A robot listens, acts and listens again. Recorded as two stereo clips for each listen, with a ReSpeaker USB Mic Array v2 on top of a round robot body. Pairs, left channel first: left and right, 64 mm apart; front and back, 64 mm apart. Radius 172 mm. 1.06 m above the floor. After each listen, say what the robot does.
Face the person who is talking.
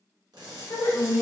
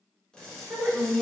Turn 105° left.
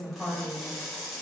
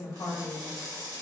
Facing the woman speaking, 1 to 2 m away.